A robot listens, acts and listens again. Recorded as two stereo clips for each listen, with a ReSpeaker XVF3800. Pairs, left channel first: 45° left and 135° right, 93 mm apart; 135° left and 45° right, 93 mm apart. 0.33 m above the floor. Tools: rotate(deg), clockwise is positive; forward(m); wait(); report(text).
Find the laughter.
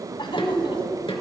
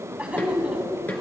rotate(-30)
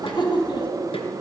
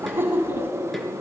rotate(-20)
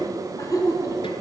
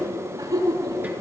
report("Facing the laughter.")